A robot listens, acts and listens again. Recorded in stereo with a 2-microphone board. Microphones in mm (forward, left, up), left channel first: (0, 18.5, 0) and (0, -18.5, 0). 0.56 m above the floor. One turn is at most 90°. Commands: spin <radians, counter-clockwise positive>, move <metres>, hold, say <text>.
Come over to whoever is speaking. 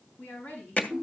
spin 0.87
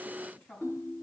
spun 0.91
spin 1.31
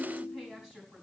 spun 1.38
move 1.0
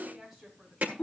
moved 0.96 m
move 1.0
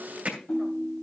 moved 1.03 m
hold
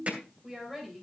move 1.0
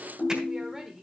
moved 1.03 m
spin -0.17
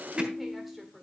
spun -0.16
move 1.0
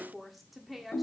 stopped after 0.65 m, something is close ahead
say Arrived at the woman speaking, straight ahead.